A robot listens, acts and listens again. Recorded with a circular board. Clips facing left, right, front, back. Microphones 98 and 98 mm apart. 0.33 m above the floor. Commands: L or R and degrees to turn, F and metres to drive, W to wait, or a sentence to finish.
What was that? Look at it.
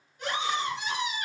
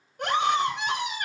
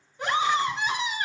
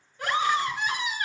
R65
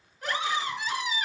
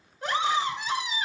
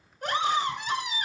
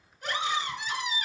R25
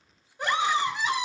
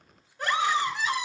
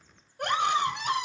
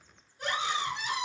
L20
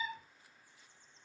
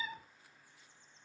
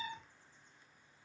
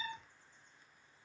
Found it: a scream, straight ahead.